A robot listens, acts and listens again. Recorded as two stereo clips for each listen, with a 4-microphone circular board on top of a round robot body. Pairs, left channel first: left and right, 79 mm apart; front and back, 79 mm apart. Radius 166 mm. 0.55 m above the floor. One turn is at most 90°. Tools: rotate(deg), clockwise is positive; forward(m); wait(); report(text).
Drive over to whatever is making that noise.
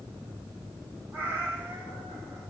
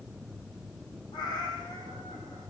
rotate(25)
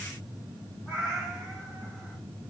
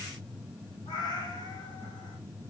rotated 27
forward(1.0)
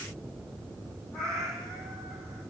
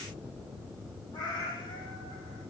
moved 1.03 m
forward(1.0)
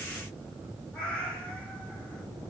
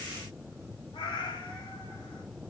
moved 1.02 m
rotate(-15)
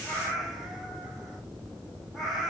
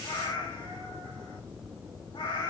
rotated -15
forward(1.0)
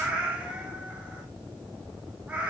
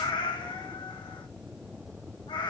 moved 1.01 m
rotate(15)
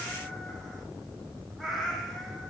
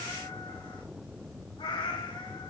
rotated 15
forward(1.0)
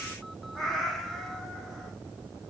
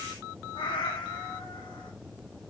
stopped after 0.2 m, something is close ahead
report("I am next to the cat meowing.")